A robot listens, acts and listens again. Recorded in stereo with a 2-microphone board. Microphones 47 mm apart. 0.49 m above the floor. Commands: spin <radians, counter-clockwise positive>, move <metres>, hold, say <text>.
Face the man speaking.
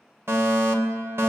hold
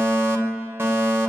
hold
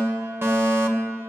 say I can't make out a man speaking, only a fire alarm.